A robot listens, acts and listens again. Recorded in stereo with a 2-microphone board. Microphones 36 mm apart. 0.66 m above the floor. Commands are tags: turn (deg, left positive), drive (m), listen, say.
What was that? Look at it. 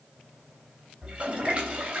<turn deg="-35"/>
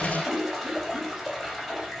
<say>Facing the toilet flushing, 2 to 4 m away.</say>